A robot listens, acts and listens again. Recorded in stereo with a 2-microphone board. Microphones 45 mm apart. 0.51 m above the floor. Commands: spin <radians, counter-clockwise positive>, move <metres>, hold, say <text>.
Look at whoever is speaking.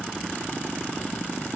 hold
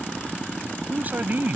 spin -0.79
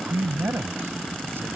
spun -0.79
spin -1.48
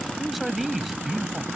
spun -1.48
say Facing the man speaking.